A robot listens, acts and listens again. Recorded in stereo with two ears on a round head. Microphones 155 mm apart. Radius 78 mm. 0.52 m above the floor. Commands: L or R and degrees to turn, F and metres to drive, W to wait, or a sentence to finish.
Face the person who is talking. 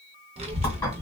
R30
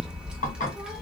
Facing the child speaking, under 1 m away.